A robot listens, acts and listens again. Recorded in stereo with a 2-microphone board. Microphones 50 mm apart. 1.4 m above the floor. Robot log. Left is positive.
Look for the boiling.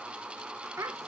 cmd idle
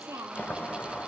note: The boiling: about 30° left or 150° left.
cmd yaw +30
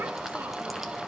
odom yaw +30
end: Found it: boiling, straight ahead, 1 to 2 m away.